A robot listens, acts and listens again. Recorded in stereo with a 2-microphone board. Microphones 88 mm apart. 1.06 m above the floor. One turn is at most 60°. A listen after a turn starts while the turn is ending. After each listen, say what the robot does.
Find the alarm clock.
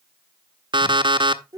Turn 60° right.
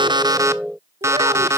Turn 35° right.
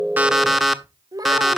Facing the alarm clock, under 1 m away.